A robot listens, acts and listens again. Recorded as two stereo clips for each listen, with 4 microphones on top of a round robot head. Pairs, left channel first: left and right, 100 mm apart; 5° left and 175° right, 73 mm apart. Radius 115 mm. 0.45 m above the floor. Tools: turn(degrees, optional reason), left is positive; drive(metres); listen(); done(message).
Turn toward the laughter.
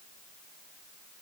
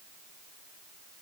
listen()
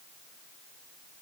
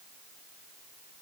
listen()
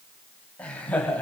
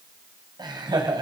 turn(degrees=165, reason="The laughter: 165° left.")
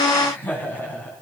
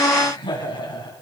turn(degrees=15, reason="The laughter is now 15° left.")
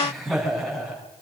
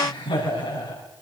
done("Facing the laughter, over 4 m away.")